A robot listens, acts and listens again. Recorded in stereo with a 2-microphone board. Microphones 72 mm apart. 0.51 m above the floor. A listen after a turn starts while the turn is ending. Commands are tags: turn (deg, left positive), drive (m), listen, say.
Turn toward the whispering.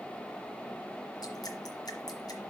<listen/>
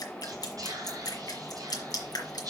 <turn deg="-60"/>
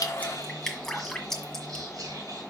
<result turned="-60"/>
<turn deg="-60"/>
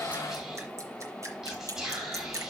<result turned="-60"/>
<turn deg="-10"/>
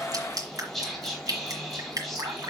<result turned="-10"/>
<say>Facing the whispering, 2 to 4 m away.</say>